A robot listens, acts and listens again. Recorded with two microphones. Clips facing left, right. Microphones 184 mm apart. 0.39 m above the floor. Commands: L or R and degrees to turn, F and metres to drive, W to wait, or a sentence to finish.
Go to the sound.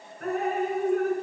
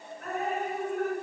L65
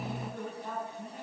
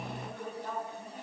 F1.0
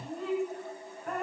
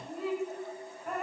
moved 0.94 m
F1.0
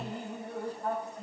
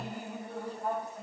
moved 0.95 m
F1.0
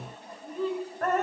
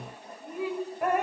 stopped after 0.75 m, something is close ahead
R15
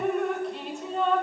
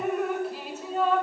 I am next to the dripping.